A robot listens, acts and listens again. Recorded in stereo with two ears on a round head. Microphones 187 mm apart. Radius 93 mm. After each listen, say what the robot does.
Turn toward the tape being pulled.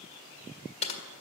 Keep listening.
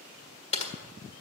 Keep listening.
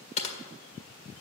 I can't make out tape being pulled to turn to.